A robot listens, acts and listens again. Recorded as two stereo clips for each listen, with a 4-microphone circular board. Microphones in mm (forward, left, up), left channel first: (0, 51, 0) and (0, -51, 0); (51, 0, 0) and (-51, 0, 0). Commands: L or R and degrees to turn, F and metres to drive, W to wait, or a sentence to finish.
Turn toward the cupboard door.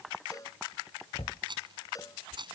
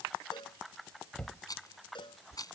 L80
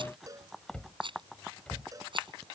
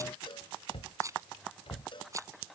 L10
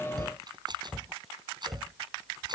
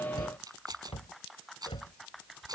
Found it: a cupboard door, straight ahead.